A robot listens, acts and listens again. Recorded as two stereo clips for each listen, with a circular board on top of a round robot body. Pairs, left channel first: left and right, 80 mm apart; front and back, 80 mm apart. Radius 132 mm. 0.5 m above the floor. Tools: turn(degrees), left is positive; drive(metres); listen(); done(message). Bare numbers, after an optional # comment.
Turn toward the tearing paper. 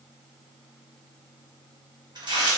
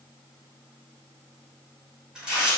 # The tearing paper: 100° right.
turn(-100)
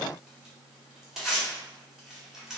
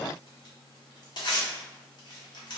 done("Facing the tearing paper.")